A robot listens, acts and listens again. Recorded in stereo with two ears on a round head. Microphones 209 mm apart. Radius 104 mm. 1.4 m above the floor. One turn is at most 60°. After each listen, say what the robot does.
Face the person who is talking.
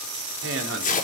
Turn 55° right.
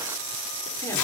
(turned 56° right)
Keep listening.
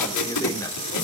Turn 15° left.
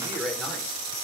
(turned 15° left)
Found it: a man speaking, straight ahead, over 4 m away.